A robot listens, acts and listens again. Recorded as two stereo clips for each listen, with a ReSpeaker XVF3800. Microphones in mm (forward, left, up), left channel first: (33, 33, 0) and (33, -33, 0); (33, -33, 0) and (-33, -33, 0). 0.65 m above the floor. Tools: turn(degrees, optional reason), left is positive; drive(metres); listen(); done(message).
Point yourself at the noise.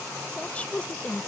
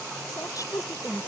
turn(degrees=20, reason="The woman speaking: 20° left.")
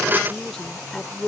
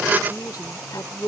done("Facing the woman speaking.")